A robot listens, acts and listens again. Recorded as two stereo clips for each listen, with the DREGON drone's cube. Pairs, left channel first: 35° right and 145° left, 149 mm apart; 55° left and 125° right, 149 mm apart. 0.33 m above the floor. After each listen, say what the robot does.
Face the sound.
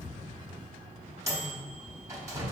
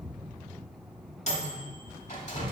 Turn 80° left.
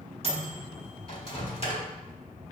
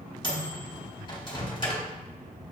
Facing the microwave, 1 to 2 m away.